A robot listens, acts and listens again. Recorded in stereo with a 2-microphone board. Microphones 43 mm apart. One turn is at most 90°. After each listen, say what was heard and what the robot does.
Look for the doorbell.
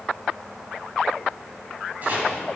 Keep listening.
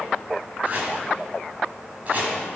Keep listening.
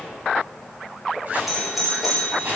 Turn 30° right.
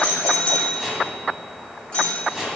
So it is at 25° left. Turn 25° left.
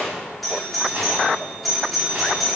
Facing the doorbell, 2 to 4 m away.